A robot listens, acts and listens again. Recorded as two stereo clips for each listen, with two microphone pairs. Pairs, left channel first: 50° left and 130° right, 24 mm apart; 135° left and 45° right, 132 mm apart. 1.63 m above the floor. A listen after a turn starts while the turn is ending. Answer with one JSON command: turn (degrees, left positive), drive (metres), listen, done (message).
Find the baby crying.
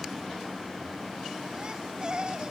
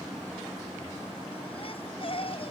{"turn": 180}
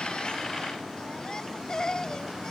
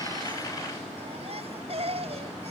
{"turn": -10}
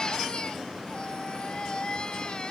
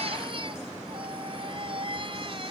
{"done": "Facing the baby crying."}